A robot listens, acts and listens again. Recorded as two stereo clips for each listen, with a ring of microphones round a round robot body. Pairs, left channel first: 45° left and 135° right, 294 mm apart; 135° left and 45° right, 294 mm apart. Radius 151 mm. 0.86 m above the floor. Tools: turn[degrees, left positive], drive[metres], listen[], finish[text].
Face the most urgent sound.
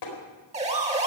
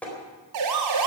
Thought: The siren: 70° right.
Action: turn[-70]
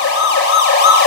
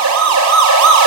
Thought: The siren is now 10° right.
Action: turn[-10]
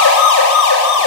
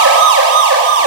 Action: finish[Found it: a siren, straight ahead, 2 to 4 m away.]